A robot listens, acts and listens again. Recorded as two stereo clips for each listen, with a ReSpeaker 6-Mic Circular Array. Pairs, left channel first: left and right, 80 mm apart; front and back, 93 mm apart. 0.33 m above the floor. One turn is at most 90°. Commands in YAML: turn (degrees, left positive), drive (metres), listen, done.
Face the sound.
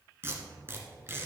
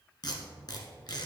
turn: -30
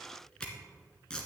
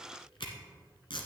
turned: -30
turn: 10
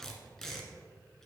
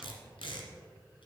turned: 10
done: "Facing the tape being pulled, 1 to 2 m away."